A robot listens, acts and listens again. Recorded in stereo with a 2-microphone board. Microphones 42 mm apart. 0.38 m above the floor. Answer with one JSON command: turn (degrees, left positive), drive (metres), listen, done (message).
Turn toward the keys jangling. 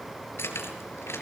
{"turn": 90}
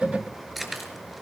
{"done": "Found it: keys jangling, straight ahead, over 4 m away."}